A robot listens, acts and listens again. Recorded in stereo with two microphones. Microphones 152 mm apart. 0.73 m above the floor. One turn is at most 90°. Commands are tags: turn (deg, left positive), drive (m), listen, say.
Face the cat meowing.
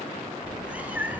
<turn deg="-30"/>
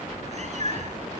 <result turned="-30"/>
<turn deg="-90"/>
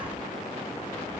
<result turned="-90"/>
<turn deg="-35"/>
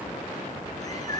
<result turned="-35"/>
<turn deg="25"/>
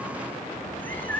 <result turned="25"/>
<turn deg="10"/>
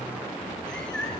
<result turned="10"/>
<say>Facing the cat meowing, over 4 m away.</say>